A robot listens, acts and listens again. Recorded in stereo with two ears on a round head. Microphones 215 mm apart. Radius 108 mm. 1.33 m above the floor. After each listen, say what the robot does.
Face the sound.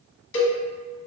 Turn 55° left.
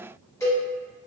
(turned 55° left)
Turn 15° left.
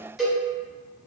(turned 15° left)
Facing the cowbell, 1 to 2 m away.